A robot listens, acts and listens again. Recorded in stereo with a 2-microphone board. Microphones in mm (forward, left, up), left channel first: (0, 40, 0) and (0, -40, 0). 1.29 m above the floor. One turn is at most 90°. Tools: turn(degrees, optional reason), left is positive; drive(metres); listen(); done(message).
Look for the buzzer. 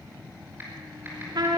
listen()
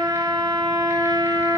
listen()
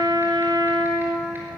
done("I can't make out a buzzer, only a trumpet.")